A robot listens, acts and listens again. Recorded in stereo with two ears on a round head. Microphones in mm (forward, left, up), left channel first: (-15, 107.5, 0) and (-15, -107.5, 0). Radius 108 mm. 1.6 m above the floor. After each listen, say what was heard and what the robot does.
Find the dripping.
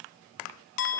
Keep listening.
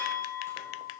Keep listening.
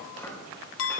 I can't make out dripping, only chopping and a clink.